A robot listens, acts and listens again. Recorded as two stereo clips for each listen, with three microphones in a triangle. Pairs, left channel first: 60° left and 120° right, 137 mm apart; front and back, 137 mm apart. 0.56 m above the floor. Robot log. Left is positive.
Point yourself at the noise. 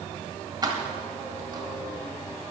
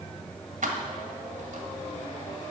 note: The keys jangling: straight behind.
cmd yaw +180
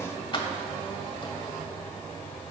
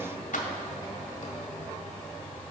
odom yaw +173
end: Found it: keys jangling, straight ahead, 1 to 2 m away.